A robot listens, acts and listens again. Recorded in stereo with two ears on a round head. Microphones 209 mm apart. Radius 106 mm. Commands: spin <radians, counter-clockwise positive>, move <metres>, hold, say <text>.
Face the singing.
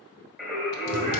spin -0.52
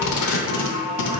spin 0.52
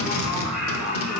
say Facing the singing, 2 to 4 m away.